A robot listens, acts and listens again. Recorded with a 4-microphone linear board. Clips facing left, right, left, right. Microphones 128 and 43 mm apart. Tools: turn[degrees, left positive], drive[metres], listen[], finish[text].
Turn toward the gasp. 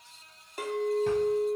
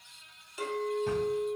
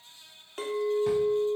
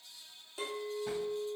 Action: listen[]
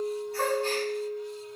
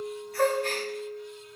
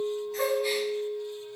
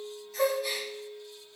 Thought: The gasp: about 30° left or 150° left.
Action: turn[30]
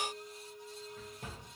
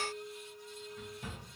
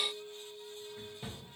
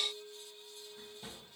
Action: listen[]
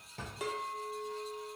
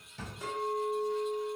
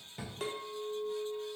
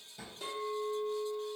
Action: finish[I heard a gasp, but can't make it out now. It was about straight ahead or 120° left.]